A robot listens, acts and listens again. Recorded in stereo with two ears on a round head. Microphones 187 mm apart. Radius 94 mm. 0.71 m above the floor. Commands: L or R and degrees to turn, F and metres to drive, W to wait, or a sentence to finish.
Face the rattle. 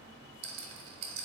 R65
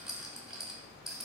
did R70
Found it: a rattle, straight ahead, under 1 m away.